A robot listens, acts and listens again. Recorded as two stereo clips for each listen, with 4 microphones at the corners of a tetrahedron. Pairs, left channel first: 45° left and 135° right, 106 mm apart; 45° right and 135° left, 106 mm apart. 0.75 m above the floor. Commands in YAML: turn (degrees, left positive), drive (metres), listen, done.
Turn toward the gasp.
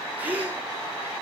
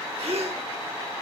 turn: 150
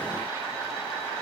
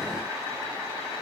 done: "Facing where the gasp came from. I can't hear it now."